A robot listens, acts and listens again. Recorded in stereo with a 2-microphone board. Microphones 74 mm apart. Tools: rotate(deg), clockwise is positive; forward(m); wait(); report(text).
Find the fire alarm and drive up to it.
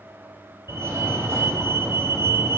rotate(40)
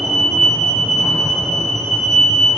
forward(1.0)
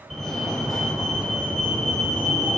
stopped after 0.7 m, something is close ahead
report("Something is in my way. I am facing the fire alarm but have not reached it.")